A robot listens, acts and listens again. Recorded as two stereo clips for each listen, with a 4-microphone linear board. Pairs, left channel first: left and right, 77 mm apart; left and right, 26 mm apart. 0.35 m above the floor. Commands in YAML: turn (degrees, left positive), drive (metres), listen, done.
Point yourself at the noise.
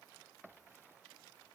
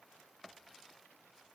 listen: true
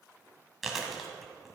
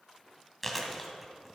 turn: 30
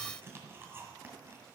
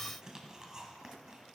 turn: -35
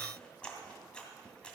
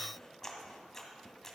turn: 15
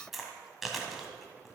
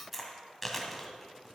done: "Found it: chewing, straight ahead."